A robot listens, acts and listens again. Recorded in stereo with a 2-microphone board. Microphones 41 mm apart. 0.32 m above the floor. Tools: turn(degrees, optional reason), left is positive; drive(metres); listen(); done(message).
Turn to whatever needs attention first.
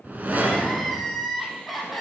turn(degrees=30)
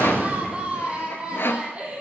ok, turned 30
turn(degrees=-25, reason="So it is at 25° right.")
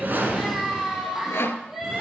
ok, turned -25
done("Facing the crying.")